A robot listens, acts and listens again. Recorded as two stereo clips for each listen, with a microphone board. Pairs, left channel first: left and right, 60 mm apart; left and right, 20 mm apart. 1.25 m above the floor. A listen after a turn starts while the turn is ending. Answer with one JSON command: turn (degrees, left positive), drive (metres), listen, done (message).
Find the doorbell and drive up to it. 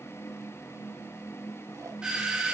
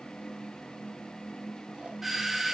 {"turn": -30}
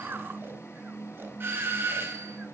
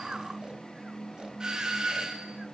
{"turn": -140}
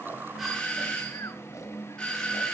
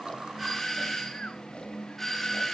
{"turn": 15}
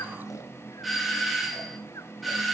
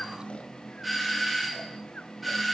{"drive": 1.0}
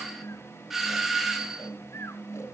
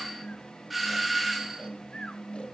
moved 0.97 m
{"drive": 1.0}
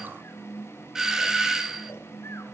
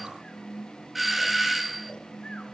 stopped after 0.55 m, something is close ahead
{"turn": -10}
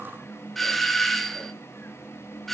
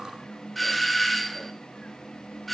{"done": "Arrived at the doorbell, straight ahead."}